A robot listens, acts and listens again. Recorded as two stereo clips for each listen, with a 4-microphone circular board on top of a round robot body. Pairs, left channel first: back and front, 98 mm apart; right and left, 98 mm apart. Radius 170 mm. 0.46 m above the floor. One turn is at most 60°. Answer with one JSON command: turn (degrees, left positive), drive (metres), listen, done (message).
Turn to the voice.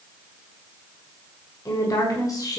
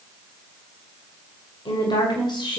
{"turn": -60}
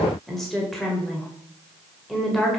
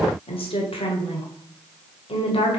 {"turn": -60}
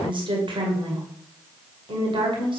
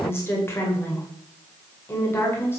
{"turn": -25}
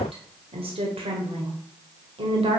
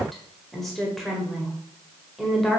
{"done": "Facing the woman speaking, 2 to 4 m away."}